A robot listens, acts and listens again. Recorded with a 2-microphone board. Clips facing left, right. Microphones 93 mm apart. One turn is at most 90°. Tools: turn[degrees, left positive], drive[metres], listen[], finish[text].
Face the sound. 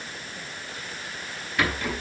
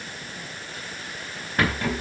Thought: The rattle: about 40° right or 140° right.
Action: turn[-40]
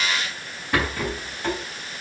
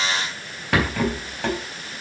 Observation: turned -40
Thought: So it is at 95° right.
Action: turn[-90]
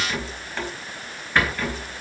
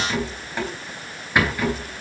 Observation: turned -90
Thought: The rattle is now 15° right.
Action: turn[-15]
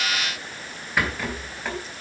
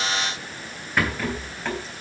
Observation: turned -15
Action: finish[Found it: a rattle, straight ahead.]